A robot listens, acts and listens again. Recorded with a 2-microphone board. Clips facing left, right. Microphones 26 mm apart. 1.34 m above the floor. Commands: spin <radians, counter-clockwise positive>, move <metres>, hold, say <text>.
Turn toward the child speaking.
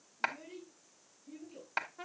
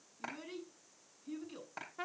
spin -1.05
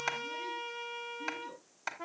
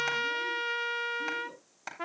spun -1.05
hold
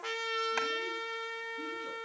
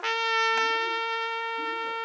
hold
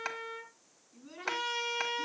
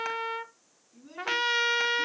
say Found it: a child speaking, straight ahead.